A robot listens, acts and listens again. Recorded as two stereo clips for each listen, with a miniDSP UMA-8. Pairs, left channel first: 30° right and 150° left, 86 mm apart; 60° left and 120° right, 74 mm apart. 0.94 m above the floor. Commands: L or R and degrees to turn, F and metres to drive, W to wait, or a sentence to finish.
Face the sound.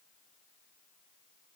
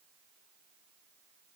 W
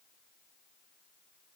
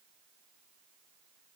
W
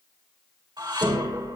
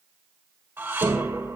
L175
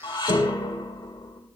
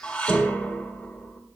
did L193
R15
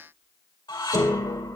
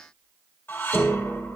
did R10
Facing the dishes clattering, 2 to 4 m away.